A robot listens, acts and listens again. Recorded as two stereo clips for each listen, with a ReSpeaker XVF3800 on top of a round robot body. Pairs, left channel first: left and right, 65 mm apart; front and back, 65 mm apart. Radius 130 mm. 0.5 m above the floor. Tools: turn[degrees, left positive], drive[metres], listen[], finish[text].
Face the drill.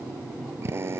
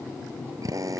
Thought: The drill: 145° right.
Action: turn[-145]
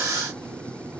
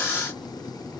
Action: listen[]
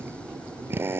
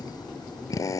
Thought: The drill is now 35° right.
Action: turn[-35]
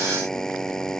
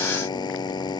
Thought: The drill is now 10° left.
Action: turn[10]
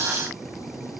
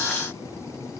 Action: listen[]
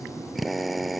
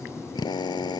Action: finish[Found it: a drill, straight ahead.]